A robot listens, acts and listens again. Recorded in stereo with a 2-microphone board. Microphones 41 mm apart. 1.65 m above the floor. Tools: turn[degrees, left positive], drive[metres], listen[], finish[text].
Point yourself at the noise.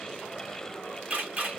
Thought: The camera shutter: about 35° right or 145° right.
Action: turn[-35]
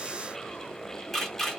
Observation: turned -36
Action: finish[Found it: a camera shutter, straight ahead.]